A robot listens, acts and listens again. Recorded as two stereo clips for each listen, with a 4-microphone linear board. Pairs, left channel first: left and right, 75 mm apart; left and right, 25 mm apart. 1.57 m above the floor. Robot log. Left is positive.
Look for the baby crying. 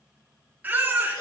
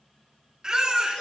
note: The baby crying: about 25° right or 155° right.
cmd yaw -25
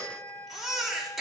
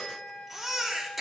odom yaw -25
end: Found it: a baby crying, straight ahead, 2 to 4 m away.